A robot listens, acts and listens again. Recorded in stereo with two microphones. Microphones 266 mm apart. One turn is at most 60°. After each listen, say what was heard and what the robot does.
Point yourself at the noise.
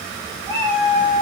Turn 30° right.
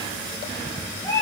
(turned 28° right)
So it is at 15° left. Turn 15° left.
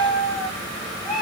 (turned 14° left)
Found it: a cat meowing, straight ahead, over 4 m away.